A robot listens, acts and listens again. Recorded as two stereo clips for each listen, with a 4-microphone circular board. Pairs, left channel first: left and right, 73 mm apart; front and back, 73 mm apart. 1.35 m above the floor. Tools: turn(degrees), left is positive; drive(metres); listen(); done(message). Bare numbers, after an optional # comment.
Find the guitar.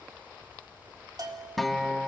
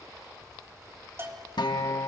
done("Facing the guitar, 2 to 4 m away.")